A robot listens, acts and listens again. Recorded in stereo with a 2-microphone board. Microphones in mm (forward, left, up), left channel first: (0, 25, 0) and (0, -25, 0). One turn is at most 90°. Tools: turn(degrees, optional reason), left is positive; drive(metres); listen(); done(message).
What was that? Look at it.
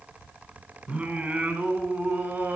turn(degrees=-30, reason="The singing: about 30° right or 150° right.")
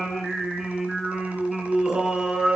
turn(degrees=-10, reason="So it is at 10° right.")
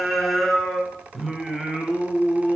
done("Facing the singing, 2 to 4 m away.")